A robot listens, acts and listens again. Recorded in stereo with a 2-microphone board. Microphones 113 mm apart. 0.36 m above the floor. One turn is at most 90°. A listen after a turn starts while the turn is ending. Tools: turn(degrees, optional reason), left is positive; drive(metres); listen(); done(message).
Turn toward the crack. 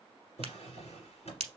turn(degrees=-70, reason="The crack: about 70° right or 110° right.")
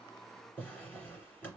listen()
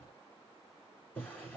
done("I heard a crack, but can't make it out now. It was about straight ahead or 40° right.")